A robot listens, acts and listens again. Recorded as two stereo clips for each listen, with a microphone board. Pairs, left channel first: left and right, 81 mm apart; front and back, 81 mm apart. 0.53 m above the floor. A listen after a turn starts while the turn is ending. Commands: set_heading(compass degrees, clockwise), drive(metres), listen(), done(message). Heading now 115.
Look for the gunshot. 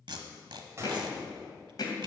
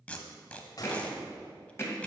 set_heading(155)
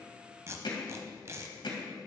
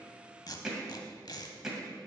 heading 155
done("I heard a gunshot from this way, but can't make it out now.")